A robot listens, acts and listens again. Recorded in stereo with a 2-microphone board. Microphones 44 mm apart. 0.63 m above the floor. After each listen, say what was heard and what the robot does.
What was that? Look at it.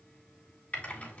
The typing on a keyboard: about 35° left or 145° left. Turn 35° left.
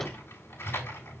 So it is at 100° left. Turn 100° left.
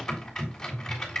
The typing on a keyboard is now 10° left. Turn 10° left.
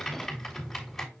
Found it: typing on a keyboard, straight ahead, 2 to 4 m away.